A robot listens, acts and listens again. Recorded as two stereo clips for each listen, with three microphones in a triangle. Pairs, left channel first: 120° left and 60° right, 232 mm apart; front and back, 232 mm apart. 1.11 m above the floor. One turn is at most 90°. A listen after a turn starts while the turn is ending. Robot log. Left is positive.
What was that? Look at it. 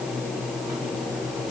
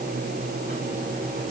cmd idle
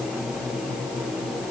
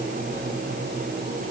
cmd idle
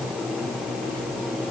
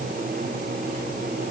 end: I can't make out anything to turn to.